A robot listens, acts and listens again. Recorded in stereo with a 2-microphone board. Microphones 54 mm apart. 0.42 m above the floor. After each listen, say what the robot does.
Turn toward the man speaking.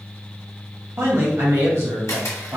Turn 65° right.
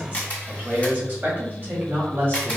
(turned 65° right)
Turn 45° right.
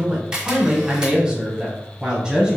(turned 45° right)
Turn 15° right.
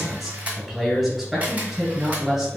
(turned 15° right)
Facing the man speaking.